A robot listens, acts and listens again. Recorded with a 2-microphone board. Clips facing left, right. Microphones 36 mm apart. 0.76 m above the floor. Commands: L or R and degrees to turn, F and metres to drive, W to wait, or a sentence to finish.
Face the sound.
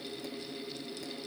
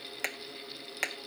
R75
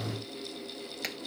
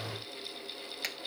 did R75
Found it: hammering, straight ahead.